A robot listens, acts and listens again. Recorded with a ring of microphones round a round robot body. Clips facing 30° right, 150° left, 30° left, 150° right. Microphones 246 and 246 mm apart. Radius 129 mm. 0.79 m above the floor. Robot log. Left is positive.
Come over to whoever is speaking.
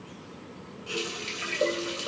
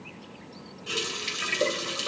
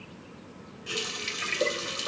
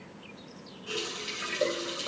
cmd idle
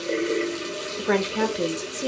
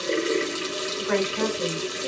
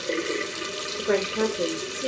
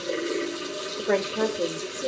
note: The woman speaking: 55° right.
cmd yaw -55
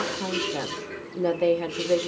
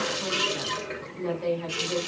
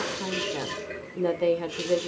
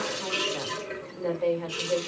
note: The woman speaking is now 10° right.
cmd yaw -10
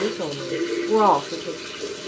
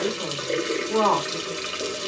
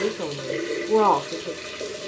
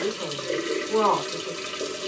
cmd fwd 1.0
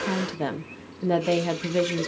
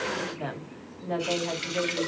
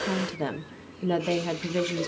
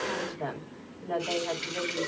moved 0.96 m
cmd fwd 1.0
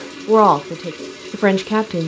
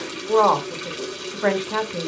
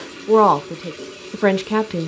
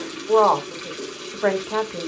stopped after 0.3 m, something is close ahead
end: I am next to the woman speaking.